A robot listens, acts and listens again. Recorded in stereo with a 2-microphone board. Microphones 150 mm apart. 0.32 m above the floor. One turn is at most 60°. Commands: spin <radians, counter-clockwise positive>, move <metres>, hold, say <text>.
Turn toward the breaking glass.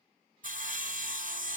hold
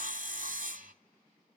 hold
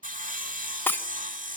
spin 0.52
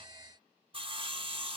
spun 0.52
hold
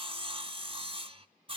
say I heard breaking glass, but can't make it out now. It was about 15° right or 135° left.